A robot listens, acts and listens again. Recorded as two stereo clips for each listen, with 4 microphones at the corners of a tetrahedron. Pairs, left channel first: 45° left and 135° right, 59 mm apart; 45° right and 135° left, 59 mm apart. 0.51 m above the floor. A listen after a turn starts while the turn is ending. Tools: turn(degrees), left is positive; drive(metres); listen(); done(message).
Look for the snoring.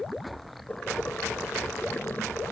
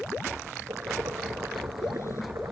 listen()
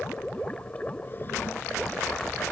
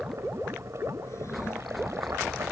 listen()
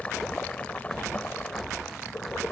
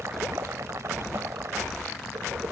done("I can't make out snoring to turn to.")